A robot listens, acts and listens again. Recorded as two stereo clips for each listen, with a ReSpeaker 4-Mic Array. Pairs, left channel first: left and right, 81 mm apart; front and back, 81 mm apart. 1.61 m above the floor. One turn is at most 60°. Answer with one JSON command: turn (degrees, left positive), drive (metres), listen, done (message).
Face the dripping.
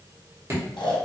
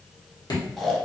{"turn": -35}
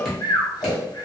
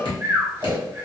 {"done": "Facing the dripping."}